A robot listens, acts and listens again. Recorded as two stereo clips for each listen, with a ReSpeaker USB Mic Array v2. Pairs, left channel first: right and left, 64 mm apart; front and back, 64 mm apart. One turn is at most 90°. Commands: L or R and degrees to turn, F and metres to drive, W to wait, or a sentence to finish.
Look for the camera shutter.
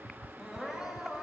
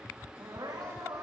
W
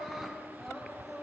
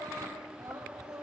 W
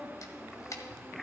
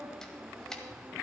R80
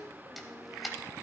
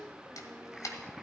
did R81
Facing the camera shutter.